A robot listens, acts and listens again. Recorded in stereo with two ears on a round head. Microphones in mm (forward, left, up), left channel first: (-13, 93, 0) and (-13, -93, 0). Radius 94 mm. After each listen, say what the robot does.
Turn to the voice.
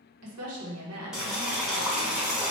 Turn 90° right.
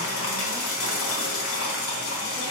Keep listening.
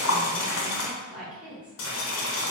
Found it: a woman speaking, straight ahead.